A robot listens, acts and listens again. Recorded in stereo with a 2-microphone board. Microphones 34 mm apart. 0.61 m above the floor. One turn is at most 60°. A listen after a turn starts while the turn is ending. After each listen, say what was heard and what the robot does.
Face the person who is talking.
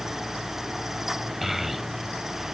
Turn 30° right.
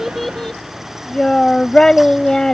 So it is at 20° left. Turn 20° left.
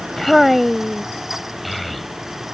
Facing the child speaking.